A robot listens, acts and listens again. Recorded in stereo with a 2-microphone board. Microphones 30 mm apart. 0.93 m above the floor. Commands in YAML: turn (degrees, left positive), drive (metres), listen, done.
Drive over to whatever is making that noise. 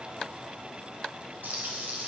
turn: -90
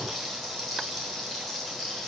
drive: 1.0
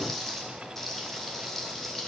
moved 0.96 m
turn: 15
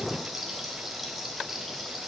drive: 1.0
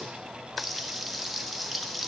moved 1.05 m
drive: 1.0
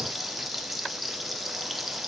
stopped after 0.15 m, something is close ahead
done: "I am next to the frying."